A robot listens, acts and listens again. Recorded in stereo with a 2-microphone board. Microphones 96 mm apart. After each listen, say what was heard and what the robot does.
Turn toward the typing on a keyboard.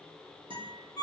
Keep listening.
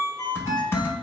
The typing on a keyboard: about 25° left or 155° left. Turn 25° left.
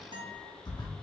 So it is at 130° left. Turn 130° left.
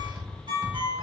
The typing on a keyboard is now 15° right. Turn 15° right.
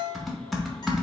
Facing the typing on a keyboard.